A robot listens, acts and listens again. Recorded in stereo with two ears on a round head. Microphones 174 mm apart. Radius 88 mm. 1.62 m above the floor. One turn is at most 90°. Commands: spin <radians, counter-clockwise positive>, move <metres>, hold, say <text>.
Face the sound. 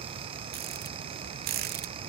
spin -0.87
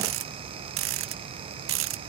spin -1.31
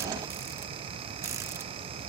spin -0.26
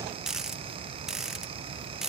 say Found it: a rattle, straight ahead.